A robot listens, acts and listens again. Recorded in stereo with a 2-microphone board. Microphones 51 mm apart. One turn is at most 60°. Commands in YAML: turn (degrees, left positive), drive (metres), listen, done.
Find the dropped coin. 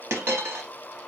turn: -60
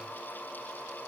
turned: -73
listen: true
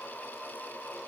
done: "I heard a dropped coin, but can't make it out now. It was about 15° left or 50° right."